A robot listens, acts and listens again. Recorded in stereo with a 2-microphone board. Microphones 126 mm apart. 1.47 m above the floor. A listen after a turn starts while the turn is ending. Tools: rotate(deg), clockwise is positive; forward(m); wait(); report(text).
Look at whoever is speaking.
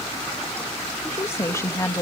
rotate(-30)
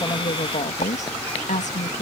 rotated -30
rotate(-100)
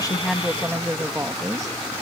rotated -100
rotate(30)
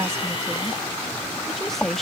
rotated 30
report("Facing the woman speaking.")